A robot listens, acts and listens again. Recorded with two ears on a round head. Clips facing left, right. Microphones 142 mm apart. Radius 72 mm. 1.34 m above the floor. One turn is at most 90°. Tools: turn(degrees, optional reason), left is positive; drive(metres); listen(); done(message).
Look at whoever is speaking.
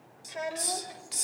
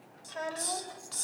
turn(degrees=15, reason="The child speaking: about 15° left or 165° left.")
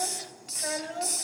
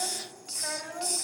turn(degrees=40, reason="The child speaking: about 40° left or 140° left.")
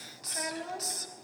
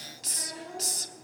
turn(degrees=90, reason="So it is at 100° left.")
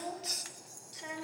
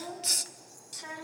turn(degrees=30, reason="The child speaking is now 30° left.")
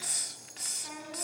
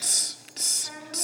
done("Found it: a child speaking, straight ahead, over 4 m away.")